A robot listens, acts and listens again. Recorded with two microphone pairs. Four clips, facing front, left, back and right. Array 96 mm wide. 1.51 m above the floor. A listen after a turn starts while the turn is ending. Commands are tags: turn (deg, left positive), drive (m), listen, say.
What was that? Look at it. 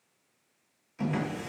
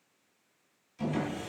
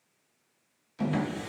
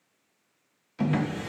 <turn deg="-100"/>
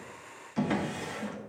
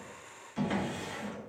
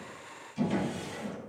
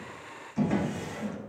<say>Facing the drawer, 1 to 2 m away.</say>